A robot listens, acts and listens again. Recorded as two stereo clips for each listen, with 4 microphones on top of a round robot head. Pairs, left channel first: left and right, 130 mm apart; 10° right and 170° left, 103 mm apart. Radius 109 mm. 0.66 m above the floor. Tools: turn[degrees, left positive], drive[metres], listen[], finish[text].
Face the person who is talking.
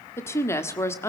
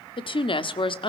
Thought: The woman speaking: 20° left.
Action: turn[20]
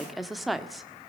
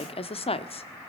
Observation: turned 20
Action: finish[Facing the woman speaking.]